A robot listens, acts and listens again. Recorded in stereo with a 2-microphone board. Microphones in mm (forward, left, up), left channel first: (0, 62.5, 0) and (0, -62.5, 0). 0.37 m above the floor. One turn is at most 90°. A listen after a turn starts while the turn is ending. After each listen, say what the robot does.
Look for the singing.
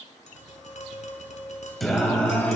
Turn 30° left.
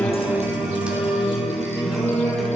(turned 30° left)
Turn 30° left.
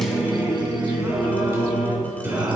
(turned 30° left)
Turn 20° right.
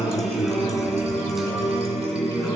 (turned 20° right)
Found it: singing, straight ahead, 2 to 4 m away.